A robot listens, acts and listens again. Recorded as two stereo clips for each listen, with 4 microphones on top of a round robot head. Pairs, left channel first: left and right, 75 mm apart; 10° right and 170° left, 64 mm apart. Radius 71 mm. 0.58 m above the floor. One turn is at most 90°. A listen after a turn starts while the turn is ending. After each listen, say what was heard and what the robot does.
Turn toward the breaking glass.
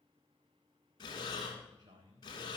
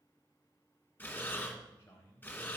Keep listening.
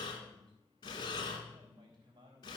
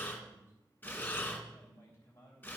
Keep listening.
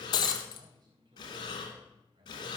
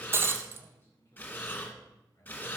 The breaking glass: 120° left. Turn 90° left.
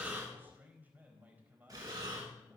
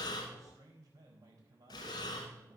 Nothing new. It was at 30° left. Turn 30° left.
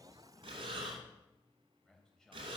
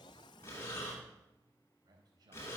I heard breaking glass from this way, but can't make it out now.